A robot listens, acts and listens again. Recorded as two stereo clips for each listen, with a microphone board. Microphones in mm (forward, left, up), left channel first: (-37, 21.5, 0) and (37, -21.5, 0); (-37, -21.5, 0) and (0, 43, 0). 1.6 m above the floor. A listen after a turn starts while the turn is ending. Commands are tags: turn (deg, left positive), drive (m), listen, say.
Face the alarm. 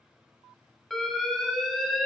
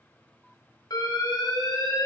<turn deg="-125"/>
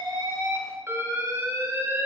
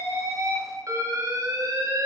<turn deg="25"/>
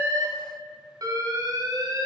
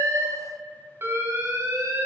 <turn deg="10"/>
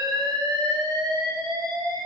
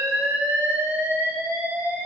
<say>Facing the alarm, 1 to 2 m away.</say>